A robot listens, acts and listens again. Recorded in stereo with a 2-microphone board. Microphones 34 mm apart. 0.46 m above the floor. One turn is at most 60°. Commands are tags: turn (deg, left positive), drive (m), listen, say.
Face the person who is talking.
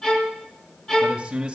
<turn deg="-25"/>
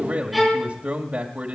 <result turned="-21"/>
<turn deg="-60"/>
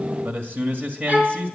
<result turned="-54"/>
<turn deg="-60"/>
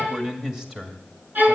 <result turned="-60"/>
<turn deg="-15"/>
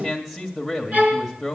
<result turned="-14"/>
<say>Facing the man speaking, 2 to 4 m away.</say>